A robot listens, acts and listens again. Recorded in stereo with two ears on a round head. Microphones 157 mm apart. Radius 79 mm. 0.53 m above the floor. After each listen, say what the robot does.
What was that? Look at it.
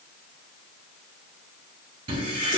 Turn 30° right.
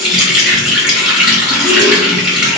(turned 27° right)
Facing the running tap.